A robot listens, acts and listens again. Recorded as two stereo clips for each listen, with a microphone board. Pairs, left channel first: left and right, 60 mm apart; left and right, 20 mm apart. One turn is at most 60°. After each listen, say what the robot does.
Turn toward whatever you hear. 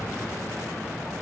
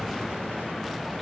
Keep listening.
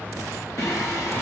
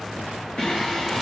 Turn 55° left.
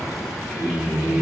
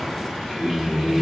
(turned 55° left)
Turn 20° right.
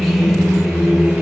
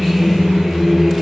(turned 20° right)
Turn 15° right.
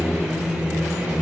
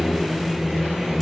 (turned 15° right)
Turn 10° right.
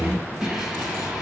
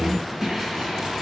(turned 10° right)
Found it: singing, straight ahead, 2 to 4 m away.